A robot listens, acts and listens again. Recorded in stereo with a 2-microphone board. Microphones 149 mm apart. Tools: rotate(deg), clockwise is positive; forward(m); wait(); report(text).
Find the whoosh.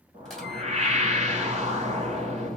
rotate(50)
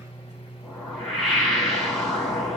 report("Facing the whoosh, 2 to 4 m away.")